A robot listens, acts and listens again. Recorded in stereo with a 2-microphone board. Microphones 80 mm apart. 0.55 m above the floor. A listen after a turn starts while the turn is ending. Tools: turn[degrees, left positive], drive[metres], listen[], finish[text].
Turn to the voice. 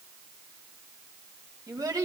Thought: The child speaking: about 45° right or 135° right.
Action: turn[-45]
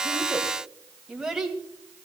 Action: finish[Found it: a child speaking, straight ahead, 2 to 4 m away.]